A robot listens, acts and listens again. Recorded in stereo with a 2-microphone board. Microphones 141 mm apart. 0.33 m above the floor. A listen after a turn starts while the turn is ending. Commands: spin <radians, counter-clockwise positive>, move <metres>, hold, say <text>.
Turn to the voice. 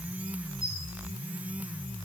hold
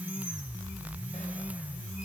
hold
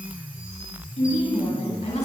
spin 0.87
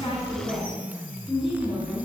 say Facing the woman speaking, over 4 m away.